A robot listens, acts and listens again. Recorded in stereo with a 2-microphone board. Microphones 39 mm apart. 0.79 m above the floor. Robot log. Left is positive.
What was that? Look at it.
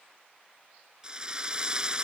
note: The drill: about 20° right or 160° right.
cmd yaw -20
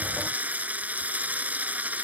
note: So it is at 135° right.
cmd yaw -135
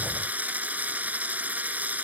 note: The drill is now 40° right.
cmd yaw -40
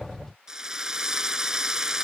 note: The drill is now 15° right.
cmd yaw -15
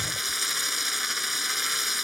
end: Facing the drill.